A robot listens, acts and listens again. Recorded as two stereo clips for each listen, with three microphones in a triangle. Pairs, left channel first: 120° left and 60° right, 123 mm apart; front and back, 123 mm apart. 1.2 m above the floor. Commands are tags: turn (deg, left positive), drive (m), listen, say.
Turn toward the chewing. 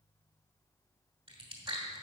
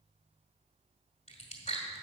<turn deg="-20"/>
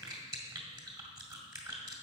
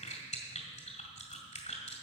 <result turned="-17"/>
<say>Facing the chewing.</say>